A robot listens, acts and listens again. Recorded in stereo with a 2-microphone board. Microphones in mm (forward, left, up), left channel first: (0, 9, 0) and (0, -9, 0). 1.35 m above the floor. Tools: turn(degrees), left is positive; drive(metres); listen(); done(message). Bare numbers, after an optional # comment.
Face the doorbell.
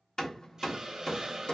listen()
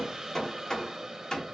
listen()
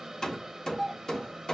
turn(-30)
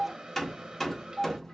# So it is at 140° right.
turn(-140)
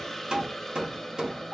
# The doorbell is now 10° right.
turn(-10)
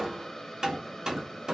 listen()
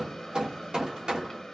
listen()
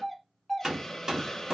done("Found it: a doorbell, straight ahead, 1 to 2 m away.")